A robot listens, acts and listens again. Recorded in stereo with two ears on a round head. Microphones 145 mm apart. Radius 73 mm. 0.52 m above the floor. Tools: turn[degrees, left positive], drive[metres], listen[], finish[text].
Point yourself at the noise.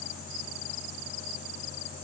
Action: listen[]
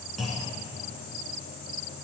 Action: turn[30]
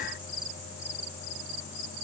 Action: listen[]
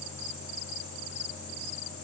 Action: finish[I heard a clunk, but can't make it out now. It was about 30° right or 150° left.]